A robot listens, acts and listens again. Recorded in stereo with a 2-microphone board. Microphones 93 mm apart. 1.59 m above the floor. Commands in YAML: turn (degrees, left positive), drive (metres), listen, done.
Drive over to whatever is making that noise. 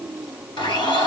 turn: 60
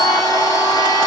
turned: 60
turn: 50
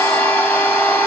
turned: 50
turn: 15
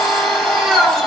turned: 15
drive: 1.0
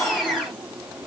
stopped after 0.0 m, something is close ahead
done: "Blocked. The blender is further on, straight ahead."